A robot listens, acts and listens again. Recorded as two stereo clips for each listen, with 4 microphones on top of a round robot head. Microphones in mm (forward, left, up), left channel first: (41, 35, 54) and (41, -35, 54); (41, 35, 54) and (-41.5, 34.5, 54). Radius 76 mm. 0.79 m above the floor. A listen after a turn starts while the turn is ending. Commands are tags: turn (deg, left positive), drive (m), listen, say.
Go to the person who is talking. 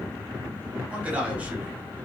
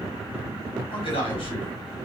<turn deg="-20"/>
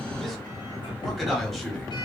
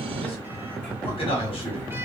<drive m="1.0"/>
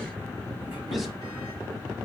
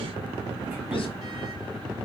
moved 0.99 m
<listen/>
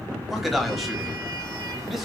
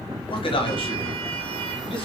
<drive m="1.0"/>
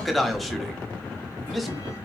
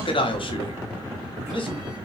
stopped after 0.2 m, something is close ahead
<say>Arrived at the man speaking, straight ahead.</say>